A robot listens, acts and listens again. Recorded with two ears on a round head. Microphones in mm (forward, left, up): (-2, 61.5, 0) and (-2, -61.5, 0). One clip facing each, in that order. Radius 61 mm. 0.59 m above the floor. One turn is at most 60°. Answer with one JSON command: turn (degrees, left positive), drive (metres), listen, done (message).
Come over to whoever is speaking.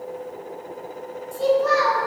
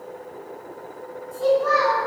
{"turn": 35}
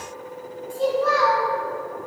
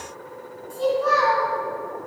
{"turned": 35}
{"drive": 1.0}
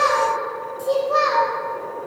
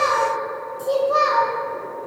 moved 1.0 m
{"drive": 1.0}
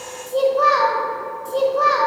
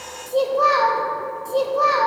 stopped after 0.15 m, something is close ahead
{"done": "I am next to the child speaking."}